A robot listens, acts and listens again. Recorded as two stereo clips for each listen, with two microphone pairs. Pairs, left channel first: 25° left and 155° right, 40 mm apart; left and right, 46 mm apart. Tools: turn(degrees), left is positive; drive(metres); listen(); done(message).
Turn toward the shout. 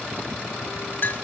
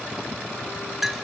listen()
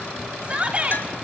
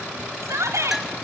turn(degrees=-95)
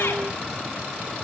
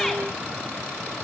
listen()
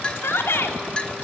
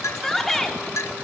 done("Found it: a shout, straight ahead, 2 to 4 m away.")